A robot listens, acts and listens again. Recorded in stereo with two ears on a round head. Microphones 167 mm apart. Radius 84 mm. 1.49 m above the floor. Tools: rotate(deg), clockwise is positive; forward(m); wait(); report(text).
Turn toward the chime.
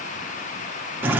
wait()
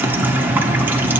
wait()
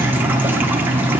report("I can't make out a chime, only dripping.")